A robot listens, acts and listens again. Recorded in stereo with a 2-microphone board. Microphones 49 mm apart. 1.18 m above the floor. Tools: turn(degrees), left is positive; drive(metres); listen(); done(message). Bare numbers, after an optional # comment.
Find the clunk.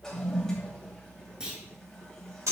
# The clunk: about 15° right or 165° right.
turn(-15)
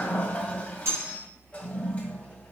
listen()
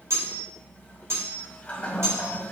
done("I heard a clunk, but can't make it out now. It was about straight ahead or 150° right.")